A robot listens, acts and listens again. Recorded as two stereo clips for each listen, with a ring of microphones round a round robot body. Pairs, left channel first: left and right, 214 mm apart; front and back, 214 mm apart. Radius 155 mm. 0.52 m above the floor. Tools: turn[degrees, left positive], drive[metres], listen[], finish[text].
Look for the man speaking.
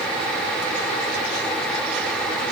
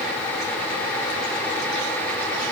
Action: listen[]
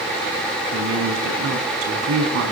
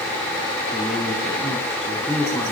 Thought: The man speaking: 85° right.
Action: turn[-85]
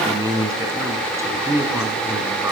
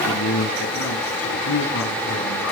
Thought: The man speaking is now 15° right.
Action: turn[-15]
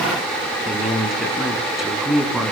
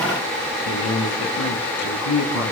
Action: finish[Facing the man speaking.]